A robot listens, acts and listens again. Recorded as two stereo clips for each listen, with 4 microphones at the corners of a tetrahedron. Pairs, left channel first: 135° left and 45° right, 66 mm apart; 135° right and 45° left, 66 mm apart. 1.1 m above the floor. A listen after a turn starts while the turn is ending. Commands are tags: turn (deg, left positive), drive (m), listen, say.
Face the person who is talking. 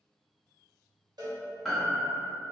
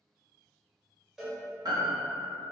<listen/>
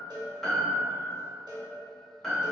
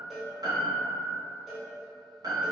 <listen/>
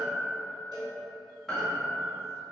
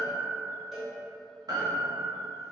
<say>I can't make out anyone speaking, only a piano and a cowbell.</say>